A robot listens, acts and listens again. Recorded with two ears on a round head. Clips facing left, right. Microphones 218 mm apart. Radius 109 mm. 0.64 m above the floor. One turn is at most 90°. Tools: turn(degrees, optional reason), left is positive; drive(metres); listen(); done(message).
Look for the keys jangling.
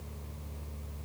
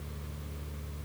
listen()
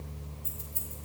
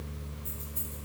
turn(degrees=45, reason="The keys jangling: about 45° left or 135° left.")
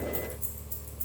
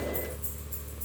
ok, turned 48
turn(degrees=75, reason="So it is at 75° left.")
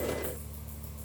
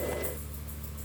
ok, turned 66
turn(degrees=10, reason="Nothing new. It was at 10° left.")
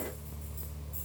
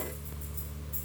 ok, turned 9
listen()
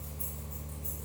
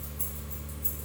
turn(degrees=-20, reason="The keys jangling is now 20° right.")
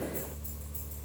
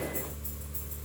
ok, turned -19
listen()
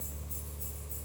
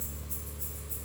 listen()
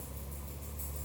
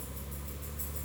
done("I heard keys jangling from this way, but can't make it out now.")